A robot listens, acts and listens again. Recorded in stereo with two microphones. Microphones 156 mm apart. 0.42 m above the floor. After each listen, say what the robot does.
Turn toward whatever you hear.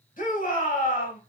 Turn 60° left.
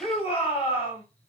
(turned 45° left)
Turn 45° left.
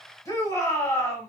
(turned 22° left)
Turn 25° left.
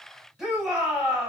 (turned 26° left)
Found it: a shout, straight ahead, 1 to 2 m away.